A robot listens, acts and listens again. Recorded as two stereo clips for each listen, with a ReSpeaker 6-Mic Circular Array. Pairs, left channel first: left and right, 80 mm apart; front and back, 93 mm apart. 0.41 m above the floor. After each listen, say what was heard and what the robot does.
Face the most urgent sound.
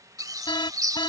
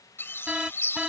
The alarm: 100° left. Turn 100° left.
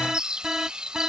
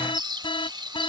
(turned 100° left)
Found it: an alarm, straight ahead.